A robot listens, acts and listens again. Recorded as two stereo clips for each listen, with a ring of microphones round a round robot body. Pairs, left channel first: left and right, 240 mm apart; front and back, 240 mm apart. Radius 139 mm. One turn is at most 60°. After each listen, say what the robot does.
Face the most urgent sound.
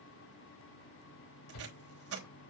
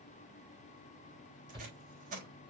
Turn 60° left.
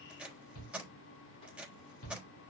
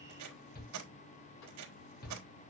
Turn 50° left.
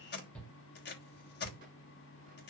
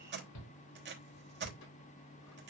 Found it: a shout, straight ahead.